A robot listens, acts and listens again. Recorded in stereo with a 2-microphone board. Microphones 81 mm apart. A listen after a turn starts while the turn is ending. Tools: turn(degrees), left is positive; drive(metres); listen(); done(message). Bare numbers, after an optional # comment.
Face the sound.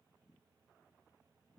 listen()
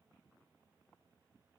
listen()
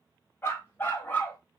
# The dog barking: about 20° left or 160° left.
turn(20)
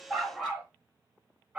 # So it is at 20° right.
turn(-20)
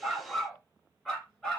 done("Found it: a dog barking, straight ahead, 2 to 4 m away.")